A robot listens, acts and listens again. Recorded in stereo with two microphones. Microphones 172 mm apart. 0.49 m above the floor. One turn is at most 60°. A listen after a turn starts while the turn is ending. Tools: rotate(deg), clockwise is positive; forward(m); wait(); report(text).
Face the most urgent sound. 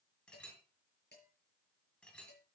wait()
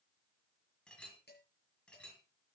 wait()
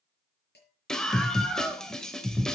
rotate(-30)
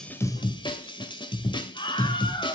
rotate(-60)
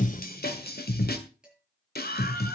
rotate(-60)
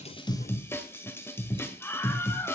rotate(-15)
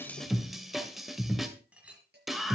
report("Found it: a scream, straight ahead, 2 to 4 m away.")